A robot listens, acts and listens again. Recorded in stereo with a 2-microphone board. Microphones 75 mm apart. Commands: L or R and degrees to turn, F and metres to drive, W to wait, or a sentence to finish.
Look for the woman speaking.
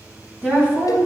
R30
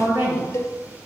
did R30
R125
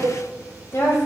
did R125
L45
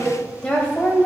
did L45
L20
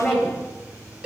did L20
L10
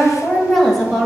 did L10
Found it: a woman speaking, straight ahead.